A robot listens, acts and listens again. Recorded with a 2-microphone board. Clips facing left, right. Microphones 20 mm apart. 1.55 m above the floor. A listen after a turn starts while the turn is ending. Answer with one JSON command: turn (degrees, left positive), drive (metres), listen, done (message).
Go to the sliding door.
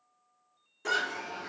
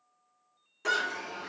{"turn": -35}
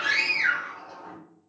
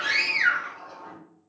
{"drive": 1.0}
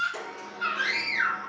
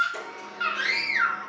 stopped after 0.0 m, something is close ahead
{"turn": 10}
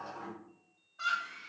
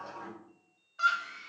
{"done": "Something is in my way. I am facing the sliding door but have not reached it."}